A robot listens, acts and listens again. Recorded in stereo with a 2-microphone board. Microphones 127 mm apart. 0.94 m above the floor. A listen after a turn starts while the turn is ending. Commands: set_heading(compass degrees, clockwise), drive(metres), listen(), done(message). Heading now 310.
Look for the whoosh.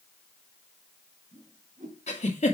set_heading(40)
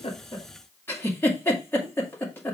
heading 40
listen()
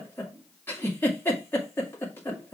set_heading(50)
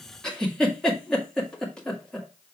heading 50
done("Facing the whoosh.")